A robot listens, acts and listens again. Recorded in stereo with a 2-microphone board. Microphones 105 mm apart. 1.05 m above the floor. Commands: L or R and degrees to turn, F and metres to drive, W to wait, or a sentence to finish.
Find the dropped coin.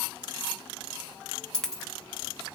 L30
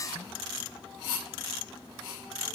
W
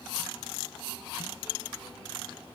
I heard a dropped coin, but can't make it out now. It was about 25° right or 145° left.